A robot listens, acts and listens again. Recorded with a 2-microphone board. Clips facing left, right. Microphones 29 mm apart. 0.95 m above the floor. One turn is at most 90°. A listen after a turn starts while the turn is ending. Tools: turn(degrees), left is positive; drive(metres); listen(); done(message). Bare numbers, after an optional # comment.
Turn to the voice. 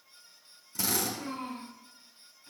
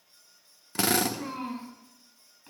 # The child speaking: about 25° right or 155° right.
turn(-25)
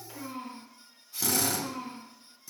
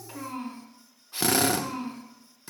# So it is at 125° right.
turn(-90)
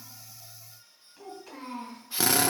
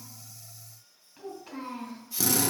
# The child speaking is now 15° right.
turn(-15)
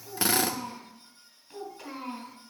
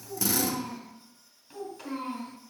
done("Found it: a child speaking, straight ahead.")